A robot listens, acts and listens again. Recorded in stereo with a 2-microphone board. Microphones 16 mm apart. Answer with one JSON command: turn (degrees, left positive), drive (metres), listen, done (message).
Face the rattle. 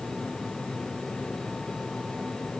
{"listen": true}
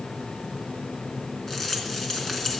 {"turn": 40}
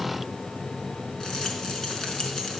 {"listen": true}
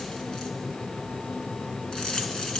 {"turn": 105}
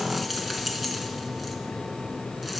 {"listen": true}
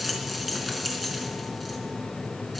{"turn": -25}
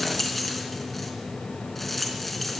{"done": "Facing the rattle."}